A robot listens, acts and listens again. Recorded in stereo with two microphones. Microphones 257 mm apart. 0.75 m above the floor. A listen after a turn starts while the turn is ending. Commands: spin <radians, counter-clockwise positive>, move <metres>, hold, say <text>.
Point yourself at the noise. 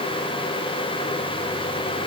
hold
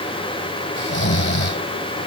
spin 0.79
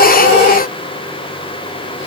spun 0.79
hold
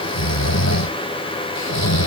spin 1.66
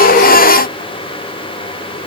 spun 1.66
hold
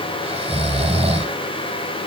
spin -0.44
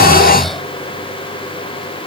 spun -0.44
say Found it: snoring, straight ahead.